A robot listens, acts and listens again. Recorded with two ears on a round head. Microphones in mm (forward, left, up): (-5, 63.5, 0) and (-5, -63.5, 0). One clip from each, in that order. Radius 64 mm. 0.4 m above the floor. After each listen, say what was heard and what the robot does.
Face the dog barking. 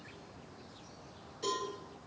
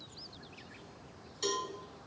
Keep listening.
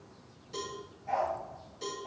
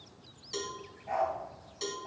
Turn 30° left.
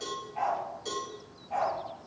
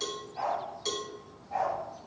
So it is at 135° left. Turn 135° left.
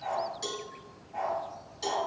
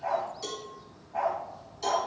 The dog barking is now 45° left. Turn 45° left.
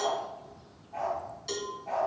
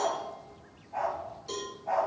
Facing the dog barking, over 4 m away.